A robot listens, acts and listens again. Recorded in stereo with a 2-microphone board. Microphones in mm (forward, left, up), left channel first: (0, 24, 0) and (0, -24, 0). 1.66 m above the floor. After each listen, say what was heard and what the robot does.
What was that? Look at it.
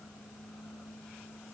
Keep listening.
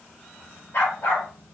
The dog barking: about 35° left or 145° left. Turn 35° left.
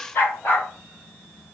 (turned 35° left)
So it is at 125° left. Turn 125° left.
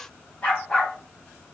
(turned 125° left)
The dog barking is now 25° left. Turn 25° left.
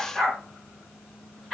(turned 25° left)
Facing the dog barking, 2 to 4 m away.